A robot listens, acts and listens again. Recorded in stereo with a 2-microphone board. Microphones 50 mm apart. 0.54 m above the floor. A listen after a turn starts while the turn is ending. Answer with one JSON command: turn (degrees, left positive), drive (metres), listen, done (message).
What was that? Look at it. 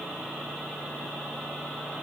{"listen": true}
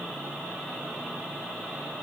{"listen": true}
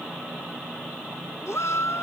{"turn": 70}
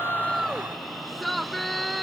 {"done": "Facing the shout."}